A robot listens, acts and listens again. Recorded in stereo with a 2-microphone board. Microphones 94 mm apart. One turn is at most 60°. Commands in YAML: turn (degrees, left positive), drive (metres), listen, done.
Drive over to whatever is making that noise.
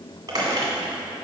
turn: -45
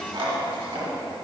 turn: -60
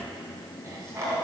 turn: -40
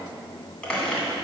turn: 10
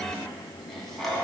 drive: 1.0
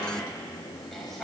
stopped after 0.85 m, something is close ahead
done: "Arrived at the squeak, straight ahead."